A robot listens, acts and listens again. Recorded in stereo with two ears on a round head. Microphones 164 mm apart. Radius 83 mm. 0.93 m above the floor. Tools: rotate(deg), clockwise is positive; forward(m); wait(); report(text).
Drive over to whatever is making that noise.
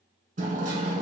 rotate(45)
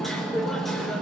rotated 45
forward(1.0)
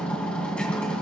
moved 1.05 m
forward(1.0)
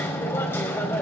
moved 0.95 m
rotate(-15)
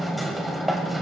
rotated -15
forward(1.0)
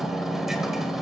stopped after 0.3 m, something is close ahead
report("I am next to the hammering.")